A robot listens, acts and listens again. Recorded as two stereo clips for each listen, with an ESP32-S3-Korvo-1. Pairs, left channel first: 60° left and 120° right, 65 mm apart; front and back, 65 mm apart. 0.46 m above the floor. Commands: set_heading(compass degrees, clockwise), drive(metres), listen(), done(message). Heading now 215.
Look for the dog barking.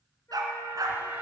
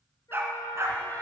set_heading(355)
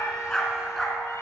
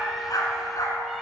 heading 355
set_heading(25)
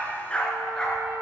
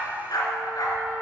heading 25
set_heading(45)
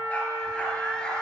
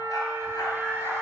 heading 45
set_heading(60)
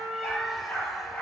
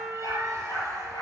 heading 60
done("Facing the dog barking.")